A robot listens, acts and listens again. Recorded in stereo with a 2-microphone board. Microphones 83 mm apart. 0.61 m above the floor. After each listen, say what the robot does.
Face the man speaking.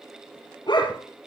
Keep listening.
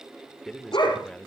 Turn 30° left.
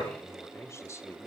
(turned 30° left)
Turn 140° left.
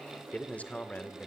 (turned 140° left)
Turn 20° left.
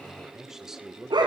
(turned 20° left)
Found it: a man speaking, straight ahead, 2 to 4 m away.